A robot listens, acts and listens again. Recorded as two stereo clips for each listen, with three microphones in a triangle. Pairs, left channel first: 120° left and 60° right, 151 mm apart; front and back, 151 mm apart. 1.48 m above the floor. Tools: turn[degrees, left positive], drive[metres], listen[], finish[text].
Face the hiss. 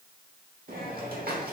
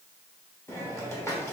Thought: The hiss: 70° right.
Action: turn[-70]
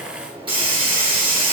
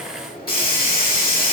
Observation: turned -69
Action: finish[Facing the hiss.]